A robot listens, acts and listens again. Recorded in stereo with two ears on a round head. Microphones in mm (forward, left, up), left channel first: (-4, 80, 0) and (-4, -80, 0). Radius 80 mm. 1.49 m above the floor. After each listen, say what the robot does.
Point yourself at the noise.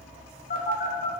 Turn 45° left.
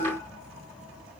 Keep listening.
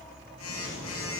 Turn 85° left.
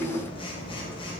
Turn 30° left.
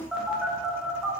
Found it: a phone buzzing, straight ahead.